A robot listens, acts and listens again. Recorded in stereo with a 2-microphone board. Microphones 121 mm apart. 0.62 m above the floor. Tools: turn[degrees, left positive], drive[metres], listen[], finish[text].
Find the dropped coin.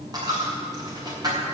Thought: The dropped coin: about 35° right or 145° right.
Action: turn[-35]
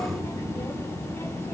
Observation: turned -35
Action: listen[]
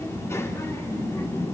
Action: finish[I heard a dropped coin, but can't make it out now. It was about straight ahead or 110° right.]